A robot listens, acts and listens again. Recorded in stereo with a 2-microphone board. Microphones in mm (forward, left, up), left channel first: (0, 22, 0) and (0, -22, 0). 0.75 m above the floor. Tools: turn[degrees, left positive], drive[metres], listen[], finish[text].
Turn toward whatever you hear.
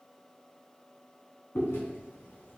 Thought: The chewing: about 70° left or 110° left.
Action: turn[70]
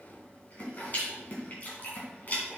Thought: So it is at 45° left.
Action: turn[45]
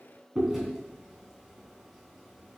Action: finish[Found it: chewing, straight ahead, 2 to 4 m away.]